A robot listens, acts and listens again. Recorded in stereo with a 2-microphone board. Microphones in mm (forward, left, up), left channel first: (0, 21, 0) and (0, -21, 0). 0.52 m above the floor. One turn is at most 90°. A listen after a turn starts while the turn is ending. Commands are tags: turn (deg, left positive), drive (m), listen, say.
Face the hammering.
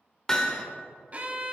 <turn deg="15"/>
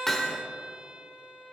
<say>Found it: hammering, straight ahead.</say>